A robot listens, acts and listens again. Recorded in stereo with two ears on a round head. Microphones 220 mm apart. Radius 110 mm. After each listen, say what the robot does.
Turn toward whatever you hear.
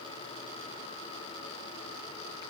Keep listening.
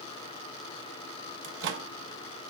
Turn 50° right.
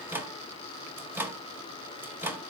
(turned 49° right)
Turn 10° right.
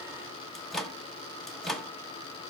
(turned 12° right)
Facing the microwave.